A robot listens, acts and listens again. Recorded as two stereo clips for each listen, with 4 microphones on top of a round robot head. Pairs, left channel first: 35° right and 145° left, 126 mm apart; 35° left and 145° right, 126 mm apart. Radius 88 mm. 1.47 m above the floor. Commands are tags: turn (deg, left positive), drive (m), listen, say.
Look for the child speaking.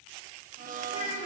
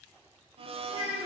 <turn deg="-85"/>
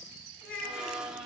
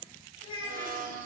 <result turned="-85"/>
<turn deg="-25"/>
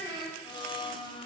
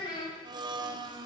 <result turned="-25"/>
<turn deg="15"/>
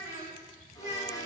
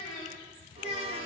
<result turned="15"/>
<say>Found it: a child speaking, straight ahead.</say>